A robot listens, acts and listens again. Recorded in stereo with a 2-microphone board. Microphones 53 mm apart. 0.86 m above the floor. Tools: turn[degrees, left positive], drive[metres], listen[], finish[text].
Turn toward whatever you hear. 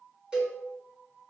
Thought: The cowbell: about 20° right or 160° right.
Action: turn[-20]
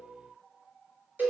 Thought: So it is at 140° right.
Action: turn[-140]
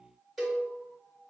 Action: finish[Facing the cowbell.]